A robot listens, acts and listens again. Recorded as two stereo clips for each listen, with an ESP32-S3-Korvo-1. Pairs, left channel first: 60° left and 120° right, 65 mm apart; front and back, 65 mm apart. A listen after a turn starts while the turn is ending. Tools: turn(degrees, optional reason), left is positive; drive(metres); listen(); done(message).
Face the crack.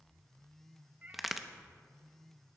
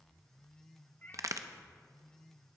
turn(degrees=155, reason="The crack: 155° left.")
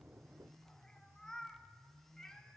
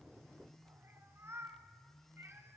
done("Facing where the crack came from. I can't hear it now.")